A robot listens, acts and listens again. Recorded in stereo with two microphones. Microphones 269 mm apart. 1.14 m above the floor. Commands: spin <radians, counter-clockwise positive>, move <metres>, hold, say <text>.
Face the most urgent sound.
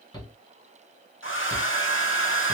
spin 0.26
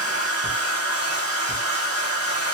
say Facing the shout.